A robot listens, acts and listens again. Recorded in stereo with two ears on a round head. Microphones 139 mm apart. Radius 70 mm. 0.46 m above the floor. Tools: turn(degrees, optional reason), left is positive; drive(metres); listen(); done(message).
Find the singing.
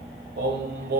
turn(degrees=-70, reason="The singing: about 70° right or 110° right.")
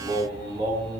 turn(degrees=-35, reason="So it is at 35° right.")
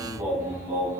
turn(degrees=-20, reason="The singing is now 20° right.")
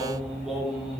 done("Facing the singing, over 4 m away.")